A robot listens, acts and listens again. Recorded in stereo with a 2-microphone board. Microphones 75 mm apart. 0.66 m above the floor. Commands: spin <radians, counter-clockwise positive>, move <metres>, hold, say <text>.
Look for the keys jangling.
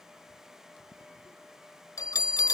hold
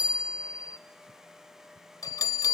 hold
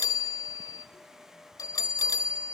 say I can't make out keys jangling, only a bell.